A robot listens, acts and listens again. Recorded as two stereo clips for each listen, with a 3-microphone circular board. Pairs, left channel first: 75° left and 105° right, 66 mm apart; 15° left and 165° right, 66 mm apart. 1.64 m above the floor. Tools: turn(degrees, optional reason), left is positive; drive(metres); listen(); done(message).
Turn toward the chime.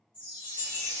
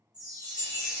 turn(degrees=-165, reason="The chime: 165° right.")
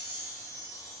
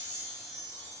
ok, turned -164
done("Found it: a chime, straight ahead, 1 to 2 m away.")